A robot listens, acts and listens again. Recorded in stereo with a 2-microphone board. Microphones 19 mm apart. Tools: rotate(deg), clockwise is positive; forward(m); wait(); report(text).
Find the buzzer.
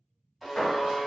rotate(30)
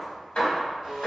rotate(150)
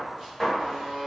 rotate(50)
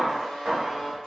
rotate(-15)
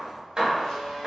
report("Found it: a buzzer, straight ahead.")